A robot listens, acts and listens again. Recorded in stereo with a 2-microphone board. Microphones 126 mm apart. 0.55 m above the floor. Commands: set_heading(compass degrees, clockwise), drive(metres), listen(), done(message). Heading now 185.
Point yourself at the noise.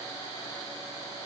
listen()
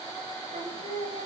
set_heading(255)
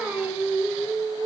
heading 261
set_heading(276)
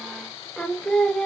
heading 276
done("Facing the singing, 1 to 2 m away.")